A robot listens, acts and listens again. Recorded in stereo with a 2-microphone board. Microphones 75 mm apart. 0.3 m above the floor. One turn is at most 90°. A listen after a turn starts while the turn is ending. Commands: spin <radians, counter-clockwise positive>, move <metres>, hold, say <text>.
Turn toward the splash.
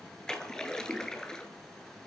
spin 0.52
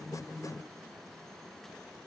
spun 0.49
hold
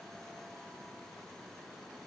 say I heard a splash, but can't make it out now. It was about 20° right or 140° left.